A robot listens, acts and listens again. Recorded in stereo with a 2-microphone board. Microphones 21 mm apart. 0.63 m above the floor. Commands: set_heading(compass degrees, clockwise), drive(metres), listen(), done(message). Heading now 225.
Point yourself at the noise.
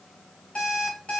set_heading(135)
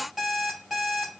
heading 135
done("Facing the alarm clock.")